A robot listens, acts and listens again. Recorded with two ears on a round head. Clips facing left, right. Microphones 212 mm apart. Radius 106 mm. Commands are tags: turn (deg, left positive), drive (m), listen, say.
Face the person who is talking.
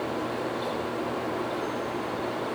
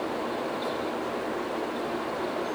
<listen/>
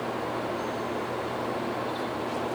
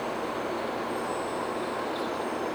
<listen/>
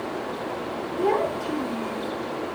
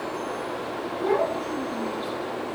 <turn deg="50"/>
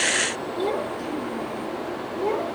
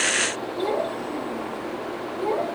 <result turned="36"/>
<turn deg="20"/>
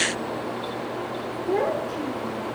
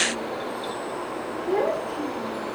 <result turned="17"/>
<say>Found it: a child speaking, straight ahead.</say>